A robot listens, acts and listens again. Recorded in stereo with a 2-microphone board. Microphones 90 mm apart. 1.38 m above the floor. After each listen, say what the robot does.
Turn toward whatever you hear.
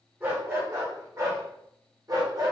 Turn 45° right.
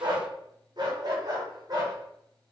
Turn 45° right.
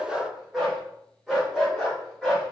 Facing the dog barking.